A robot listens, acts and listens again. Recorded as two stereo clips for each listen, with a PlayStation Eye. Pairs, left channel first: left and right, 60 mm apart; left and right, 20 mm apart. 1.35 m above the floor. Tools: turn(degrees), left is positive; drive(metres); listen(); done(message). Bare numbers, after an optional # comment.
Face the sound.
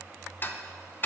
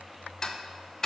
# The ticking: about 35° left or 145° left.
turn(35)
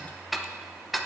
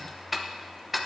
done("Facing the ticking, under 1 m away.")